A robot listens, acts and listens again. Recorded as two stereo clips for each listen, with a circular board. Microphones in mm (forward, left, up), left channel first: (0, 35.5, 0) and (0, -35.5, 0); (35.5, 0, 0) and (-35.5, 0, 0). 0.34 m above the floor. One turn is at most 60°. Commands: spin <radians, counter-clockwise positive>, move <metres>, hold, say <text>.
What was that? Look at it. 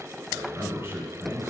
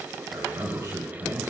spin -1.05
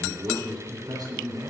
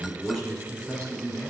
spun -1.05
spin -1.05
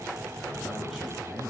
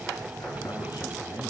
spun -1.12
say Found it: a man speaking, straight ahead.